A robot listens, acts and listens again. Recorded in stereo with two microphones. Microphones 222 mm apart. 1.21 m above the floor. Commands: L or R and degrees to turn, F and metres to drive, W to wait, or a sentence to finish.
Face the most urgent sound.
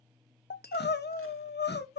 L50
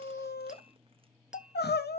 L60
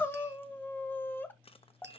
L10
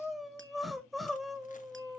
Found it: crying, straight ahead.